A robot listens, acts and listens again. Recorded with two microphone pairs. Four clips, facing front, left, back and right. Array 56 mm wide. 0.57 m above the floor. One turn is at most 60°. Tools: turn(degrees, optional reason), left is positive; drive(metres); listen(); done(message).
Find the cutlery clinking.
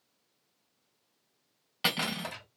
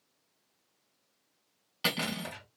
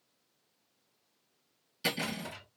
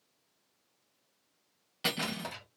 turn(degrees=15, reason="The cutlery clinking: 15° left.")
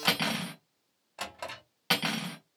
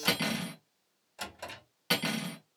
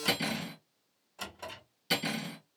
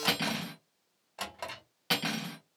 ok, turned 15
done("Facing the cutlery clinking.")